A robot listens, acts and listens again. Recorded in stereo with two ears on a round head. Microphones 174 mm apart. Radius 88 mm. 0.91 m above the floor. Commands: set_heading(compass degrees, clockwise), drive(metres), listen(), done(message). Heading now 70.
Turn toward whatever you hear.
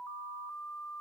listen()
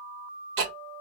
set_heading(135)
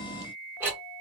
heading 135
set_heading(145)
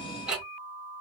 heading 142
done("Found it: ticking, straight ahead.")